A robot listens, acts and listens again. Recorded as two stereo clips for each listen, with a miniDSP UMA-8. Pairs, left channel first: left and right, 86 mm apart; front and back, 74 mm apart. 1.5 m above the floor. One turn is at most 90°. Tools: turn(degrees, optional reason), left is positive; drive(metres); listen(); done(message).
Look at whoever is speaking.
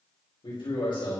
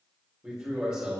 turn(degrees=90, reason="The man speaking: 100° left.")
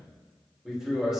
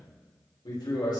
done("Found it: a man speaking, straight ahead, 2 to 4 m away.")